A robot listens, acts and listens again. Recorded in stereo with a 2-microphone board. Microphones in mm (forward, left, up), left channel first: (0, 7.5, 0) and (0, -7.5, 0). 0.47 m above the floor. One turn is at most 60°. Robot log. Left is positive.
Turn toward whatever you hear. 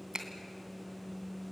note: The finger snap: about 55° right or 125° right.
cmd yaw -55
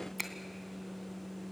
end: Facing the finger snap, 2 to 4 m away.